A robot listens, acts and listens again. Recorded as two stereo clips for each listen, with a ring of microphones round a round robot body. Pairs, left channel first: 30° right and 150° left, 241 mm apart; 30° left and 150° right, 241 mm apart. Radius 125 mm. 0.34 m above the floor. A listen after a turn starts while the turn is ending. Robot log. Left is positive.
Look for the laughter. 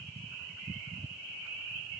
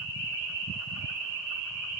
cmd idle
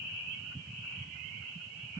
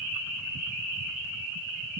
cmd idle
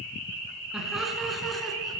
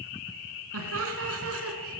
note: The laughter: 120° right.
cmd yaw -120
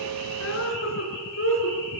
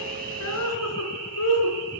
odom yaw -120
note: The laughter is now 10° left.
cmd yaw +10
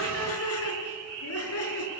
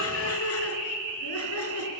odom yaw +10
end: Found it: laughter, straight ahead, over 4 m away.